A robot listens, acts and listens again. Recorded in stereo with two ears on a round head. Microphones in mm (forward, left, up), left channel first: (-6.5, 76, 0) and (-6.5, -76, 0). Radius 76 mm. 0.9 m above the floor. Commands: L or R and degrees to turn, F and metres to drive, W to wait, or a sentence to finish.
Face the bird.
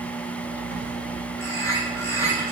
L20
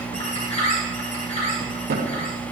L140
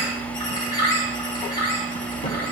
L25
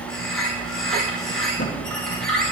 Facing the bird, over 4 m away.